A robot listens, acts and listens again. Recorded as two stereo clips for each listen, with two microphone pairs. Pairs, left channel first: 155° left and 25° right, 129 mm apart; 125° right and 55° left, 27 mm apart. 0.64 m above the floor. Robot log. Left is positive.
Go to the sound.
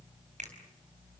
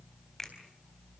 note: The finger snap: 45° right.
cmd yaw -45
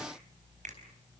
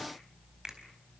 cmd idle
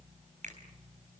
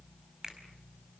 note: The finger snap is now 10° right.
cmd yaw -10
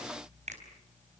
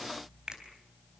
cmd fwd 1.0
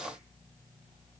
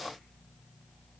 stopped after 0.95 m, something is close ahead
cmd idle
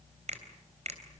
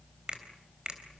end: Blocked. The finger snap is further on, straight ahead.